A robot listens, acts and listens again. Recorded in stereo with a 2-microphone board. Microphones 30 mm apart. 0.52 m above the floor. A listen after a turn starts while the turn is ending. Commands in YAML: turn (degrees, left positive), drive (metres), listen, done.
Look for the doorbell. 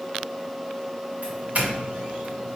turn: -60
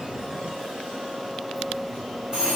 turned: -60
turn: -30
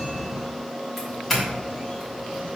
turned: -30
turn: 10
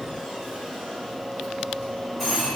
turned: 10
done: "Facing the doorbell."